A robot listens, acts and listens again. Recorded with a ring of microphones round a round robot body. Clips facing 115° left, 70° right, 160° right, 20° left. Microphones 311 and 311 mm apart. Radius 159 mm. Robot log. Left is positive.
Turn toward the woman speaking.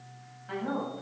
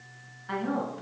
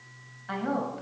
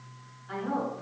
note: The woman speaking: 155° right.
cmd yaw -155
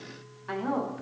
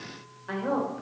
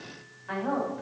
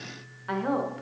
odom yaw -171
note: The woman speaking is now 40° left.
cmd yaw +40
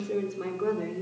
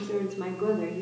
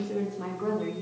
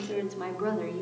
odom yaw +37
note: The woman speaking is now 30° left.
cmd yaw +30
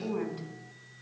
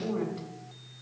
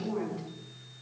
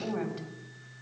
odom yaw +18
note: The woman speaking is now 25° left.
cmd yaw +25
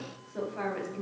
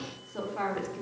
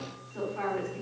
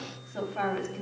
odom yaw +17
note: The woman speaking is now 10° left.
cmd yaw +10
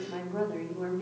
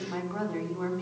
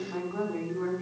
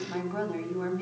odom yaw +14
end: Found it: a woman speaking, straight ahead, 1 to 2 m away.